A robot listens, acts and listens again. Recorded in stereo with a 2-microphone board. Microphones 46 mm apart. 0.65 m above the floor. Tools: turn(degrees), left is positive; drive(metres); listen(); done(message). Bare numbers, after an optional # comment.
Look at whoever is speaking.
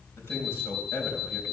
# The man speaking: about 65° left or 115° left.
turn(65)
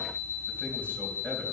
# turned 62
listen()
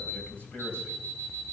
# So it is at 50° left.
turn(50)
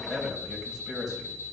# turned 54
done("Found it: a man speaking, straight ahead.")